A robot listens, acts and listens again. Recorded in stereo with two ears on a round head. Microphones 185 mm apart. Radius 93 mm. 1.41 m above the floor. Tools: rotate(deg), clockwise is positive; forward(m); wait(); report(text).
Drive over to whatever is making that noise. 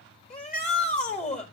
rotate(-35)
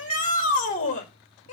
rotate(-115)
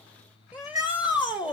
forward(1.0)
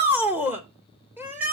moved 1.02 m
rotate(10)
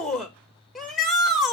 forward(1.0)
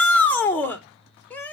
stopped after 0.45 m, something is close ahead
rotate(-10)
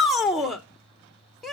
report("Arrived at the shout, straight ahead.")